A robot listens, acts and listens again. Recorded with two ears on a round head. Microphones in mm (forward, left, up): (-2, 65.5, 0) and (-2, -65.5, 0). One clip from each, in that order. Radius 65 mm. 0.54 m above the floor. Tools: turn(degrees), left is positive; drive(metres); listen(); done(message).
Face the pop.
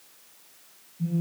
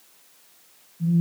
listen()
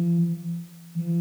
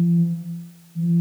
listen()
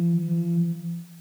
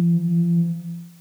done("I can't make out a pop to turn to.")